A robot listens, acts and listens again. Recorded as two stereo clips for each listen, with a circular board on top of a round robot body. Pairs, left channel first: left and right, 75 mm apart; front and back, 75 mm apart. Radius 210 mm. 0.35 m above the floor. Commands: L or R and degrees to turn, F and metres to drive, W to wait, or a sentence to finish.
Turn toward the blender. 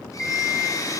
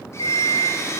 L50
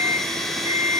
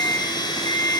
Facing the blender, 2 to 4 m away.